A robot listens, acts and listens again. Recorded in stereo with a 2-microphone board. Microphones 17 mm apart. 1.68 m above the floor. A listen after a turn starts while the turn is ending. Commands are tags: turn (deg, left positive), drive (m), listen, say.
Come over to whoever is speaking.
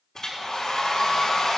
<listen/>
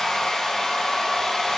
<listen/>
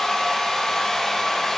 <say>I can't make out anyone speaking, only a hair dryer.</say>